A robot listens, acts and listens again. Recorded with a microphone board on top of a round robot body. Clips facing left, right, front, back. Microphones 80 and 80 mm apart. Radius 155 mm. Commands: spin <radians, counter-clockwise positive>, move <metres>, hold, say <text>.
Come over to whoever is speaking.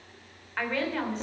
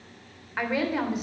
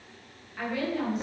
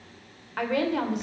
spin -2.97
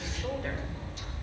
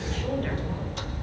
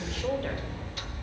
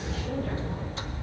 spin 0.17
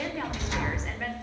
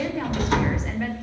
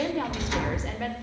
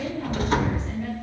move 1.0
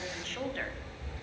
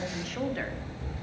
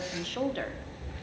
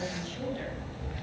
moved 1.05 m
move 1.0
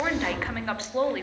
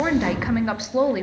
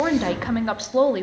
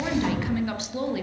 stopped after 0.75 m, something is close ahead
spin -0.26
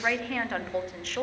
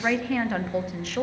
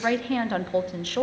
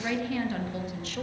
say I am next to the woman speaking.